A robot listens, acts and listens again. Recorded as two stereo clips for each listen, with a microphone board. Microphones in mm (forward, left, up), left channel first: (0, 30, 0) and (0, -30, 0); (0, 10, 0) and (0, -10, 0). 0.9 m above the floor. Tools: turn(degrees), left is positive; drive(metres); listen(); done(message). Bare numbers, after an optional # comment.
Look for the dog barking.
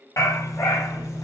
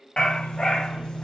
# The dog barking: about 65° left or 115° left.
turn(65)
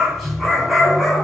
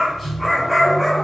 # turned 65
done("Facing the dog barking, 2 to 4 m away.")